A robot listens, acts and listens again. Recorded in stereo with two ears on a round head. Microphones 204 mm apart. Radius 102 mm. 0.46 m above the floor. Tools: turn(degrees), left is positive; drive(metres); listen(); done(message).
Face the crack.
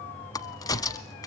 turn(degrees=15)
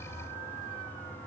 listen()
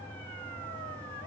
done("I heard a crack, but can't make it out now. It was about straight ahead or 150° left.")